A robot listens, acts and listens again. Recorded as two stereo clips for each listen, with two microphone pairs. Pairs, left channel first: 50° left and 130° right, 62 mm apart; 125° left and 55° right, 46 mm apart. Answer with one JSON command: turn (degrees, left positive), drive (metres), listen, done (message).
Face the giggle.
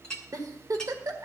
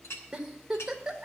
{"turn": -135}
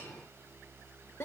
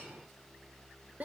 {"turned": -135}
{"done": "Facing the giggle, 1 to 2 m away."}